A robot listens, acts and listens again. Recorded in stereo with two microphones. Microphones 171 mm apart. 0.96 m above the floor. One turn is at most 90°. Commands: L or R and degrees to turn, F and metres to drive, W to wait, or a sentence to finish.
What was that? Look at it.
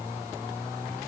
W
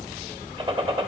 R30
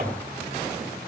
W
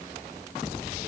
I heard a gunshot, but can't make it out now. It was about straight ahead or 120° right.